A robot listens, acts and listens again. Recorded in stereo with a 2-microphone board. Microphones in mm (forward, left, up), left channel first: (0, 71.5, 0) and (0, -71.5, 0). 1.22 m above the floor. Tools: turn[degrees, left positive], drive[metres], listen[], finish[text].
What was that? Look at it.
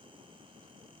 Action: listen[]
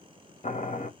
Thought: The boiling: about 55° left or 125° left.
Action: turn[55]
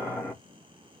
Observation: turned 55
Thought: So it is at 15° left.
Action: turn[15]
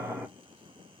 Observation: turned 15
Action: finish[Found it: boiling, straight ahead.]